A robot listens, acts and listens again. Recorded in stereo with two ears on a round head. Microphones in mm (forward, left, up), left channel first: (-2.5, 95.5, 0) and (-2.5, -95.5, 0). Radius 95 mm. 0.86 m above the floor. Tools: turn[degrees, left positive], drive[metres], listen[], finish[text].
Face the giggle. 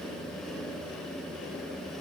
Action: listen[]
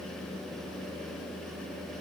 Action: listen[]
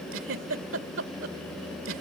Thought: The giggle: about 65° right or 115° right.
Action: turn[-65]
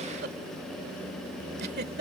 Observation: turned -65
Thought: So it is at 50° right.
Action: turn[-50]
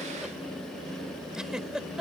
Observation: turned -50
Action: finish[Facing the giggle.]